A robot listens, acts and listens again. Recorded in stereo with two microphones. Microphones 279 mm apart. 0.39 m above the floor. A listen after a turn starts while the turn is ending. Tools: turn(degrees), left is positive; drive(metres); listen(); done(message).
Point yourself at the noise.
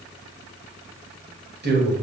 turn(degrees=-40)
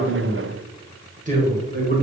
turn(degrees=-35)
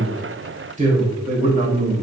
turn(degrees=-40)
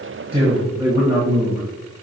turn(degrees=-15)
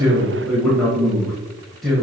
done("Facing the man speaking.")